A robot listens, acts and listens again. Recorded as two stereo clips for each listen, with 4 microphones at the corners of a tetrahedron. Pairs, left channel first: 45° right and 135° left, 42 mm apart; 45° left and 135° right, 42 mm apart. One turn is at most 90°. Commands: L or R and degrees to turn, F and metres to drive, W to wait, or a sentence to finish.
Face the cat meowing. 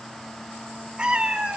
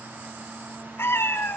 L70
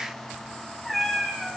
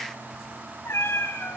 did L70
L45
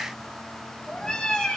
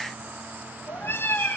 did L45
L25
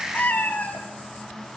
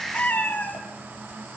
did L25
Facing the cat meowing.